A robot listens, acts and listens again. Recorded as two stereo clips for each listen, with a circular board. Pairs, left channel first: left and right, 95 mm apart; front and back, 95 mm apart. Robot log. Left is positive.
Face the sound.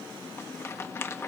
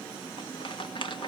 note: The rattle: 30° left.
cmd yaw +30
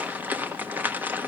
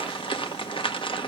note: The rattle is now 20° right.
cmd yaw -20
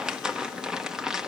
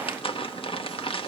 end: Found it: a rattle, straight ahead.